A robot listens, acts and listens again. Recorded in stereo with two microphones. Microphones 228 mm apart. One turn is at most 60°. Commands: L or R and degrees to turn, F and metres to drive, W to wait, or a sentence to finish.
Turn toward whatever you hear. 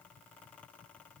W
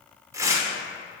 R30
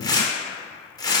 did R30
L15
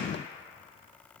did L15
W
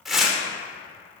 Found it: tearing paper, straight ahead.